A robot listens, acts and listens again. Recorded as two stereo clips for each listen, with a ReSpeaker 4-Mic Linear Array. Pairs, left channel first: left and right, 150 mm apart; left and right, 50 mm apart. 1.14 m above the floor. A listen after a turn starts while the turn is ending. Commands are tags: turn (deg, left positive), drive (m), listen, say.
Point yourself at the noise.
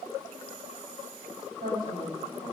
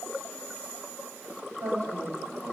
<turn deg="-90"/>
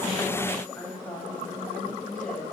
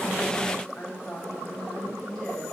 <turn deg="10"/>
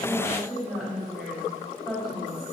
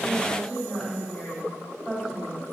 <say>Found it: a woman speaking, straight ahead, over 4 m away.</say>